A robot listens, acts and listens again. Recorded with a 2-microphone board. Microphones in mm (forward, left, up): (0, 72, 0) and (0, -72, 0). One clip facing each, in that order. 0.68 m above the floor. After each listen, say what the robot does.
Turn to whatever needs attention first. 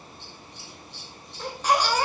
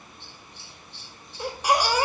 Turn 30° right.
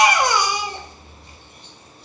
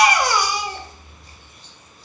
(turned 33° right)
Turn 20° left.
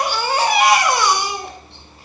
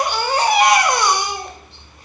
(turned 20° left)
Found it: a baby crying, straight ahead, 1 to 2 m away.